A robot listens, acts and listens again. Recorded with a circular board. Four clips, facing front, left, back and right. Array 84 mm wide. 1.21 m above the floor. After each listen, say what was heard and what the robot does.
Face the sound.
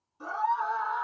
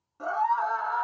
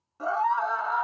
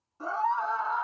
The scream: 155° left. Turn 155° left.
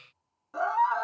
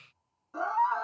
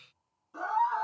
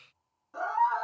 Facing the scream.